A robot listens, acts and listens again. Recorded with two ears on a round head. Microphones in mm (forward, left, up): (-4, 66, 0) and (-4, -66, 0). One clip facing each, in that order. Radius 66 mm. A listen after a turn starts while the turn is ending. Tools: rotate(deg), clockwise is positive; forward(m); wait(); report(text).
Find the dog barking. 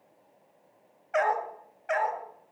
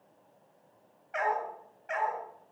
rotate(-65)
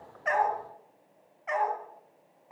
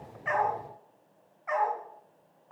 rotate(-25)
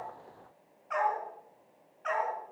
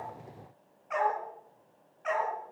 rotate(10)
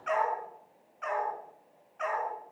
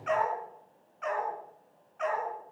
report("Facing the dog barking.")